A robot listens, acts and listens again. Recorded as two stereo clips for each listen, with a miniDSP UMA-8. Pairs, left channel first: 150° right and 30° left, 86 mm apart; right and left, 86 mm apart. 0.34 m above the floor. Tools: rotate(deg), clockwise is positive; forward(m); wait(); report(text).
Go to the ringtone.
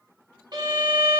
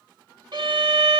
wait()
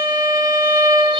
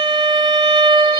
wait()
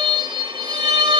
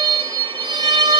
report("I can't make out a ringtone, only a violin.")